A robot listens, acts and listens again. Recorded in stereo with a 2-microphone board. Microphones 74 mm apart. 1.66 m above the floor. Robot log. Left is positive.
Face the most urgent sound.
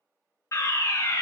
note: The fire alarm: about 45° left or 135° left.
cmd yaw +45
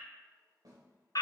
note: So it is at 85° left.
cmd yaw +85
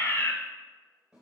note: The fire alarm is now 35° left.
cmd yaw +35
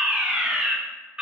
note: The fire alarm is now 10° right.
cmd yaw -10
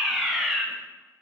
end: Facing the fire alarm, under 1 m away.